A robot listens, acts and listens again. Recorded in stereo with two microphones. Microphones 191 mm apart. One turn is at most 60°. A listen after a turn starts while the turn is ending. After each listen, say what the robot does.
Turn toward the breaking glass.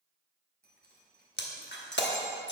Turn 60° left.
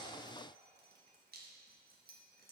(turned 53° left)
Keep listening.
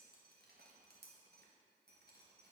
I heard breaking glass, but can't make it out now. It was about 15° left or 60° left.